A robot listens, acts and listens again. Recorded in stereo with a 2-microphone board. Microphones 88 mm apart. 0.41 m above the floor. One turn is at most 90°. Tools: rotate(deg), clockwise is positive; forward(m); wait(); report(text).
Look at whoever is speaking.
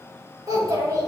rotate(40)
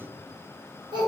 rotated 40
rotate(90)
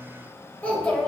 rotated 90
rotate(-20)
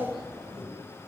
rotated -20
report("Found it: a child speaking, straight ahead.")